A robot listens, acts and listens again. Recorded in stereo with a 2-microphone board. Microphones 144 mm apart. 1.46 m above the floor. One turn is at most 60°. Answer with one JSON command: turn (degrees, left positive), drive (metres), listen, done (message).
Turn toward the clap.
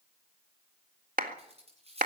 {"turn": -60}
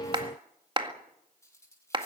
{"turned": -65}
{"turn": -35}
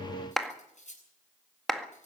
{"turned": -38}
{"done": "Found it: a clap, straight ahead."}